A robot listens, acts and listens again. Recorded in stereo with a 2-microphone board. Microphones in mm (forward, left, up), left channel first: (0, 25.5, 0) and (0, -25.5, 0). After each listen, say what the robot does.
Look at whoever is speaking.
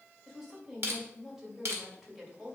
Turn 30° right.
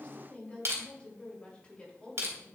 Turn 25° left.
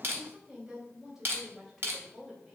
Turn 10° right.
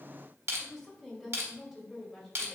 Found it: a woman speaking, straight ahead.